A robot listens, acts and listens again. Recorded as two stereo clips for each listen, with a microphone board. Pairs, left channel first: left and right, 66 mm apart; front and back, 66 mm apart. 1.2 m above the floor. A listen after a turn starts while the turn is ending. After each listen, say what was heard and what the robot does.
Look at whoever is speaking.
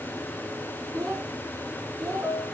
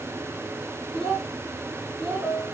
The child speaking: 90° right. Turn 90° right.
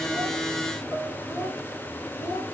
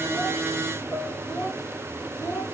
The child speaking is now 50° left. Turn 50° left.
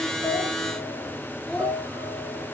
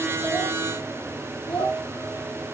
The child speaking is now 20° left. Turn 20° left.
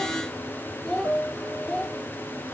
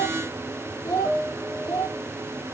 The child speaking is now 10° left. Turn 10° left.
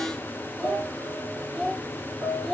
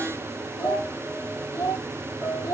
Facing the child speaking, 1 to 2 m away.